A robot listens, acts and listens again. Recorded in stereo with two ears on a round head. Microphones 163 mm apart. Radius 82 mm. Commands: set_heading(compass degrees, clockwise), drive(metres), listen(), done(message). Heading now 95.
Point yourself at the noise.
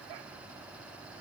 listen()
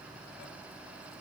listen()
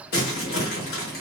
set_heading(40)
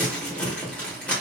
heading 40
set_heading(30)
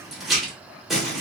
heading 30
done("Found it: crumpling, straight ahead, 1 to 2 m away.")